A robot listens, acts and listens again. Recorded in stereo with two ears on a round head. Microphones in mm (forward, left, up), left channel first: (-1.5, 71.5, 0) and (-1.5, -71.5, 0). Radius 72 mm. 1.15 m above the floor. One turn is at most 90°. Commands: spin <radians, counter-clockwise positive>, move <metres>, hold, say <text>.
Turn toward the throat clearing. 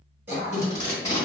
spin -0.26
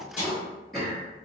say Facing the throat clearing.